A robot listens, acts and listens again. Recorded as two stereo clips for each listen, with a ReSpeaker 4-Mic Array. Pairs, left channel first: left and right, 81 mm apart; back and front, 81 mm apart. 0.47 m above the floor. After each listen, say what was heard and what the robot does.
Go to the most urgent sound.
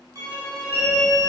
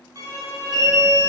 The alarm: 30° left. Turn 30° left.
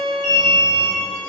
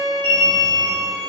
The alarm is now 10° right. Turn 10° right.
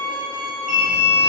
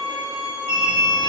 Drive 1.0 m forward.
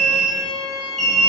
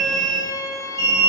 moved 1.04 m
Drive 1.0 m forward.
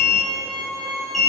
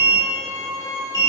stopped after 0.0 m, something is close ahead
I am next to the alarm.